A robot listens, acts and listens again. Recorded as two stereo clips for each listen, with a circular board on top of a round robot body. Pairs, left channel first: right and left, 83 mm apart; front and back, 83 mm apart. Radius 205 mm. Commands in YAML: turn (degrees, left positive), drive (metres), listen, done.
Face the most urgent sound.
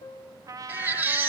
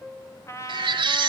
turn: 160
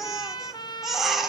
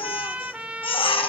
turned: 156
done: "Facing the baby crying."